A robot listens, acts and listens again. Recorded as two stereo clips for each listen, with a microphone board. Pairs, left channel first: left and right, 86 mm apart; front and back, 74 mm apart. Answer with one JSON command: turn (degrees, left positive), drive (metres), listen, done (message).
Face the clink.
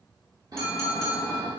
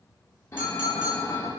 {"turn": 170}
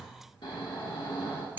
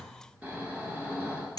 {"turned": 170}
{"turn": -25}
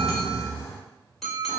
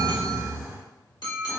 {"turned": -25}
{"done": "Facing the clink."}